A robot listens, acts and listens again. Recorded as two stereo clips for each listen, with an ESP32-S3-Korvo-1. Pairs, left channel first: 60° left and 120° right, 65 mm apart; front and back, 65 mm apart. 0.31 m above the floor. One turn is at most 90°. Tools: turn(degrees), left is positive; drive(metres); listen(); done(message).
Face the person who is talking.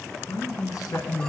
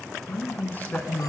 turn(degrees=55)
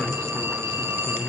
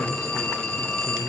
done("Facing the man speaking, 2 to 4 m away.")